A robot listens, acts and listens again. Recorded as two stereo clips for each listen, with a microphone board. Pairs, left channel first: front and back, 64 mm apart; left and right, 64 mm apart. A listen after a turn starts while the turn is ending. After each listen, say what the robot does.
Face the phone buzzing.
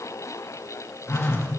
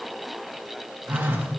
Turn 35° right.
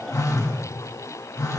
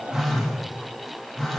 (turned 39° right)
Found it: a phone buzzing, straight ahead, 1 to 2 m away.